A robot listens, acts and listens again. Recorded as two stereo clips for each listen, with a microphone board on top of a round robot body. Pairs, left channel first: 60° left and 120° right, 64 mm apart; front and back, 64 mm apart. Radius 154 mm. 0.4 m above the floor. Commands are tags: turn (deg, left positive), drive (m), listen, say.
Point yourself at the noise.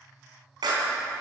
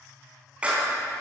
<turn deg="-110"/>
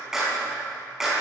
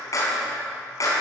<turn deg="-35"/>
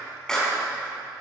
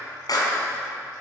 <turn deg="-20"/>
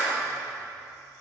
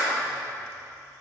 <say>Found it: a clap, straight ahead.</say>